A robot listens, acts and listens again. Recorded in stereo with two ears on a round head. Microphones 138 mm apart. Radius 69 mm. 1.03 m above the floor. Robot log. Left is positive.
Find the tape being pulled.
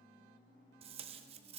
note: The tape being pulled: about 40° right or 140° right.
cmd yaw -40
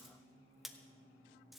end: Facing the tape being pulled.